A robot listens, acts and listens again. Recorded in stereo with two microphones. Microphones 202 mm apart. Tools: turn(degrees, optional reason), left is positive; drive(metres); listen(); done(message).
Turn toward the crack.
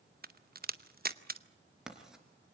turn(degrees=-45, reason="The crack: about 45° right or 135° right.")
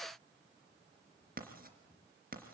listen()
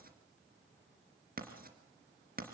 done("I heard a crack, but can't make it out now. It was about straight ahead or 90° right.")